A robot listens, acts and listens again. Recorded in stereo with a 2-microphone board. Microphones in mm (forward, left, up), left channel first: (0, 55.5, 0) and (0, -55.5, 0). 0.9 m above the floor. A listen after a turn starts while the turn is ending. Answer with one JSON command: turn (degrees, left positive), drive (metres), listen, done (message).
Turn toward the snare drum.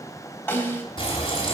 {"turn": 15}
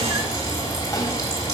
{"listen": true}
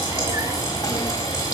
{"listen": true}
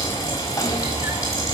{"done": "I heard a snare drum, but can't make it out now. It was about straight ahead or 150° left."}